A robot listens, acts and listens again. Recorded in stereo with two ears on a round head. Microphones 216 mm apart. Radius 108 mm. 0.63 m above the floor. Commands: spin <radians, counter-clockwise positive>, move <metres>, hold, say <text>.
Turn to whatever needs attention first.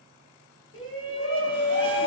spin 1.05
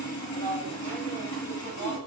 spin 0.17
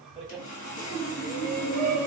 say Found it: a shout, straight ahead, 1 to 2 m away.